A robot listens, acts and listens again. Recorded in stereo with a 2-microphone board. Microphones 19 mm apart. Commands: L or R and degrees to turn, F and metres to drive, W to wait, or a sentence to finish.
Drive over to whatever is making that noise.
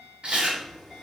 R90
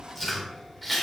F1.0
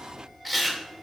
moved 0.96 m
R10
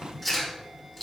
F1.0
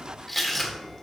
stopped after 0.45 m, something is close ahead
Arrived at the chewing, straight ahead.